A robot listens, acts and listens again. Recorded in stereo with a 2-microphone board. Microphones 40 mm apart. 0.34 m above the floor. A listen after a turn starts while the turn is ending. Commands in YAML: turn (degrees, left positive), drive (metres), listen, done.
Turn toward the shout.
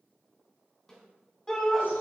turn: 15
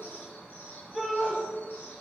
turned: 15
done: "Found it: a shout, straight ahead."